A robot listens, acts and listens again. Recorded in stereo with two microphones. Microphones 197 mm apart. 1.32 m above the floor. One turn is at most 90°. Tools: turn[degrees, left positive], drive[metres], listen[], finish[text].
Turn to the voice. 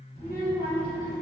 Thought: The child speaking: about 40° left or 140° left.
Action: turn[40]
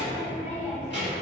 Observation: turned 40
Thought: So it is at 115° left.
Action: turn[90]
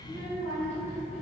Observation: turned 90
Thought: The child speaking is now 35° left.
Action: turn[35]
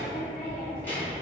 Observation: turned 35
Thought: The child speaking is now 15° left.
Action: turn[15]
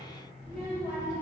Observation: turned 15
Action: finish[Facing the child speaking, 2 to 4 m away.]